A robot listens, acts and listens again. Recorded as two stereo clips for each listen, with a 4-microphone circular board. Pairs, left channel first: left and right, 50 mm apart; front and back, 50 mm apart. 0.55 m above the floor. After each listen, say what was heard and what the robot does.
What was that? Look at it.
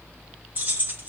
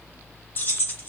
The keys jangling: 40° right. Turn 40° right.
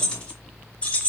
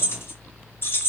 The keys jangling is now 35° left. Turn 35° left.
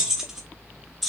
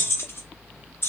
Facing the keys jangling.